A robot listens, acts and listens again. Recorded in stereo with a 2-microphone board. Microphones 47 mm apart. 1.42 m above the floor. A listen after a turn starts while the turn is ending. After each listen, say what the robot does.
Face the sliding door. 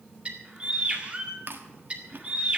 Keep listening.
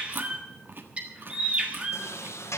Turn 90° left.
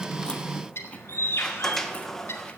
Found it: a sliding door, straight ahead, 1 to 2 m away.